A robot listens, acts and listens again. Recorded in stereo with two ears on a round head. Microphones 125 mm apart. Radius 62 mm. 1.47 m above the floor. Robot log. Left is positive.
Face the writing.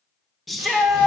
cmd idle
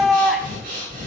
cmd idle
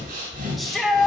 end: I can't make out writing to turn to.